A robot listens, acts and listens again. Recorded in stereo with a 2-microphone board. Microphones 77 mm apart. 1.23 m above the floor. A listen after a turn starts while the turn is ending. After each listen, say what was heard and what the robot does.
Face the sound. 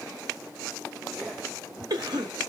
The cough: about 60° right or 120° right. Turn 60° right.
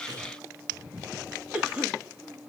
So it is at 15° right. Turn 15° right.
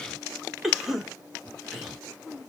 Facing the cough.